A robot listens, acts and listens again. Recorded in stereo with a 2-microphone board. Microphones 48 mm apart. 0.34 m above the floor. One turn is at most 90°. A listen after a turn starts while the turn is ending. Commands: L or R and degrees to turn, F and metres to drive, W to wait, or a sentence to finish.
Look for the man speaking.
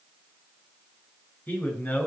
L35
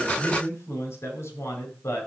L90
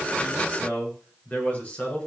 L30
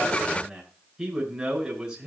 R10
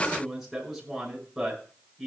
Facing the man speaking, over 4 m away.